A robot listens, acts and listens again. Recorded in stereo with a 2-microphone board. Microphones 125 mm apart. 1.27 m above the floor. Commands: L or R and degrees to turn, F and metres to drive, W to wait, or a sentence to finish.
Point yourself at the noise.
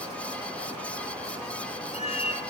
L55
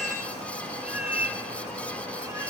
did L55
R15
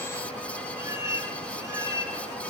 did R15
R25
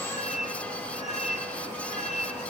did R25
Facing the cat meowing.